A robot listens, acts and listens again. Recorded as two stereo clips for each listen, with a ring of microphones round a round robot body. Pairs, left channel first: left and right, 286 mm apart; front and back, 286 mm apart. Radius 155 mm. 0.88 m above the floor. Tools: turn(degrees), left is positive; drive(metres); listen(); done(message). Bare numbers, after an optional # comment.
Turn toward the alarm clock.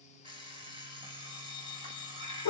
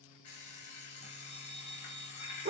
# The alarm clock: 20° right.
turn(-20)
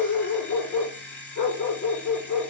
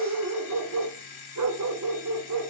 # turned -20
done("Facing the alarm clock.")